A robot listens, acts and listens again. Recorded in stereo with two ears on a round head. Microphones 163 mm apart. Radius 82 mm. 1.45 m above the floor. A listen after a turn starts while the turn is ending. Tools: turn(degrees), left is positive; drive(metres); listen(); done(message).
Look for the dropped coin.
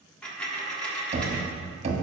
turn(degrees=30)
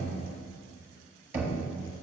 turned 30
listen()
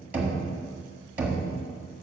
done("I heard a dropped coin, but can't make it out now. It was about 25° right or 145° left.")